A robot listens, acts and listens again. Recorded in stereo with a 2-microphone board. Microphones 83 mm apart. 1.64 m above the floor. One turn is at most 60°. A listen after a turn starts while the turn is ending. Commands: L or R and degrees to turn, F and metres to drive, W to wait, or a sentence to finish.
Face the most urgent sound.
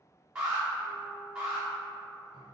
R30
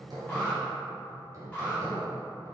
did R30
L20
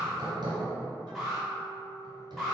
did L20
Found it: an alarm, straight ahead.